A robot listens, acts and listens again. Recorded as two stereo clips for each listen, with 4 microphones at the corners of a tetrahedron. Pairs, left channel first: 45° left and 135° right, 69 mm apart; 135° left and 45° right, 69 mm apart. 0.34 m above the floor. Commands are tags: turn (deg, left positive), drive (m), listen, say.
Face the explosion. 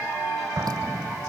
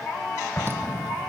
<turn deg="-170"/>
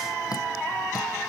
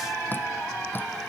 <say>I heard an explosion from this way, but can't make it out now.</say>